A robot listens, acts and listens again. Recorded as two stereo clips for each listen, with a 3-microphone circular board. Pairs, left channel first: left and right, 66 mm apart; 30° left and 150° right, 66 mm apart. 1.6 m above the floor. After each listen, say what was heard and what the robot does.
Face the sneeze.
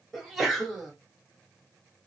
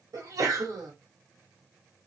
The sneeze: straight behind. Turn 180° left.
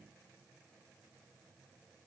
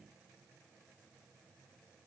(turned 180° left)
I heard a sneeze from this way, but can't make it out now.